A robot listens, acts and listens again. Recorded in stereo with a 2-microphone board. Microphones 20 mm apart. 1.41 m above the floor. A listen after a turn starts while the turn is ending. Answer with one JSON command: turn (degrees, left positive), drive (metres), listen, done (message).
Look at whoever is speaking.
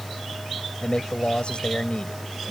{"turn": 60}
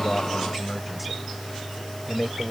{"done": "Facing the man speaking."}